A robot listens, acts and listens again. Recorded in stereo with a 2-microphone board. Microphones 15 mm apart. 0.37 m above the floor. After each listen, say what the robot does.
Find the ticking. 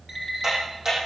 Turn 30° right.
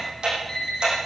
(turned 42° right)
Turn 105° right.
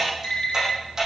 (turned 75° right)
Turn 30° right.
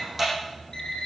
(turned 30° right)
Facing the ticking.